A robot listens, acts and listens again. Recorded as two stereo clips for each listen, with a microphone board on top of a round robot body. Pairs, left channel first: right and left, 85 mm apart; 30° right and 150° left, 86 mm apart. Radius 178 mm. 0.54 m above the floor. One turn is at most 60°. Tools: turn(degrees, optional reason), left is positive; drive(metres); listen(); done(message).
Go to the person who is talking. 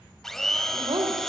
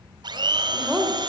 turn(degrees=60, reason="The woman speaking: 70° left.")
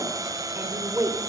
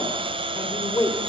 turn(degrees=25, reason="The woman speaking is now 25° left.")
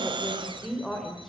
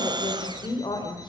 drive(metres=1.0)
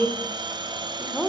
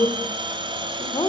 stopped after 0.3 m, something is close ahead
done("Blocked. The woman speaking is further on, straight ahead.")